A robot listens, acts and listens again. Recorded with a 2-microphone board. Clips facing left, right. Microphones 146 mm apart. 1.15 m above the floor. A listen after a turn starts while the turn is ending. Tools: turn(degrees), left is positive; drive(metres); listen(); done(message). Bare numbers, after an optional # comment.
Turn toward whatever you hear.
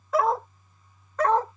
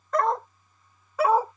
turn(-30)
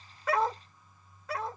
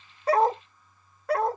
# So it is at 115° right.
turn(-115)
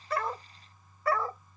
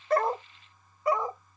# The dog barking is now 20° right.
turn(-20)
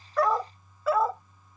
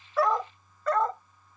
# The dog barking is now 10° left.
turn(10)
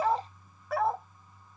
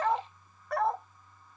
done("Found it: a dog barking, straight ahead.")